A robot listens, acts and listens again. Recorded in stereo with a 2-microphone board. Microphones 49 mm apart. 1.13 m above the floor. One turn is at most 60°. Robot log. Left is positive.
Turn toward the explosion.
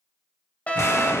cmd yaw +60
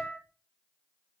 note: Nothing new. It was at 30° left.
cmd yaw +30
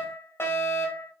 end: I heard an explosion from this way, but can't make it out now.